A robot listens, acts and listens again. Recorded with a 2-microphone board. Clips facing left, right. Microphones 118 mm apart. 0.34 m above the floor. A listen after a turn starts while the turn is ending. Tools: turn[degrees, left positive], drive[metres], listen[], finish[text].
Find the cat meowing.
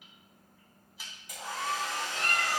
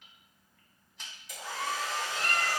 Thought: The cat meowing: about 70° left or 110° left.
Action: turn[70]
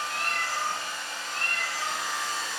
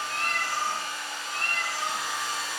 Thought: So it is at 20° right.
Action: turn[-20]
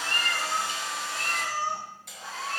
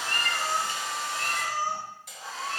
Thought: The cat meowing is now 20° right.
Action: turn[-20]
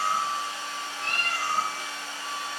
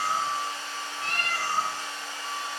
Action: finish[Found it: a cat meowing, straight ahead, 2 to 4 m away.]